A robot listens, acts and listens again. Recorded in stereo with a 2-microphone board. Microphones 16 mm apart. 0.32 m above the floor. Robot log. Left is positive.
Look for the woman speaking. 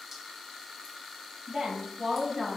note: The woman speaking: about 60° right or 120° right.
cmd yaw -60
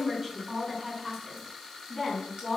note: So it is at 40° right.
cmd yaw -40
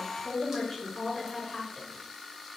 end: Facing the woman speaking, 2 to 4 m away.